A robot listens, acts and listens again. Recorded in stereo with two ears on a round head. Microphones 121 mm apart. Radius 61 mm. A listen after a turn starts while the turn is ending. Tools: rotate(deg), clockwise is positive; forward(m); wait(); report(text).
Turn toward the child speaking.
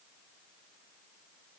wait()
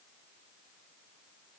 wait()
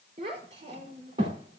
rotate(40)
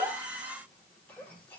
wait()
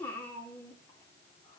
rotate(-20)
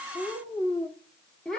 report("Found it: a child speaking, straight ahead, 2 to 4 m away.")